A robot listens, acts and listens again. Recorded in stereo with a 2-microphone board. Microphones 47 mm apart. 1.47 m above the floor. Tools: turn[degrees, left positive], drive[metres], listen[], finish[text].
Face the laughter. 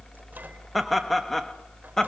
Action: turn[30]
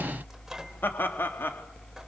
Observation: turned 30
Thought: So it is at 130° left.
Action: turn[130]
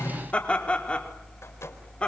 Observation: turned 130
Thought: The laughter is now 20° left.
Action: turn[20]
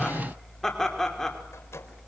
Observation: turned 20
Thought: The laughter is now 10° left.
Action: turn[10]
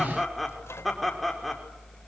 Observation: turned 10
Action: finish[Facing the laughter.]